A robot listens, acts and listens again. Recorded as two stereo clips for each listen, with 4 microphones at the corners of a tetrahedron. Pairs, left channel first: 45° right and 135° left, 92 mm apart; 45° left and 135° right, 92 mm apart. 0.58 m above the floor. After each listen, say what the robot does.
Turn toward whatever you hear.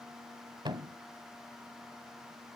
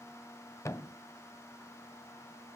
Turn 100° left.
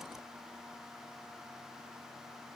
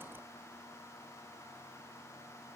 I heard a thud from this way, but can't make it out now.